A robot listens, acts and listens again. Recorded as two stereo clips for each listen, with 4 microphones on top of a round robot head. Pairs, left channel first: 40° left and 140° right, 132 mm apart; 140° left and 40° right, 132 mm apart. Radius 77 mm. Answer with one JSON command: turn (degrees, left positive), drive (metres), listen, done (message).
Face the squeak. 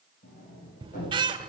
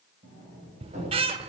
{"turn": -85}
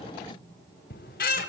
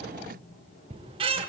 {"turn": 15}
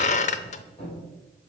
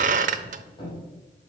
{"done": "Found it: a squeak, straight ahead."}